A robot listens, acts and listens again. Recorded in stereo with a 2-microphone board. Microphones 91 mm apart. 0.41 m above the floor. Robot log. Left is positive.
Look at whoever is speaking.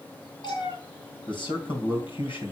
note: The man speaking: about 60° left or 120° left.
cmd yaw +60
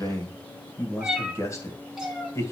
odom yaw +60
note: So it is at 35° left.
cmd yaw +35
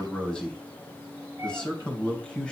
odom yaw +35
note: The man speaking is now 10° left.
cmd yaw +10
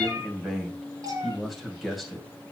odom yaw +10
end: Facing the man speaking.